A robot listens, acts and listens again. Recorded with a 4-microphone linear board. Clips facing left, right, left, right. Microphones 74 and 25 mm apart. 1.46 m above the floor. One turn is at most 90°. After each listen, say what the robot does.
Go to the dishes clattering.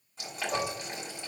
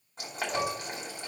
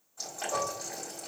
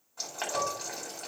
Turn 35° left.
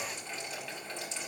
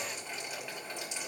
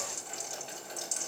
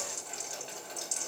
Keep listening.
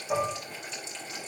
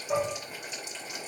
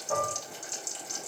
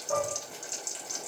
Drive 1.0 m forward.
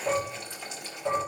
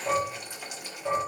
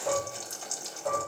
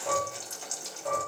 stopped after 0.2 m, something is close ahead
Blocked. The dishes clattering is further on, straight ahead.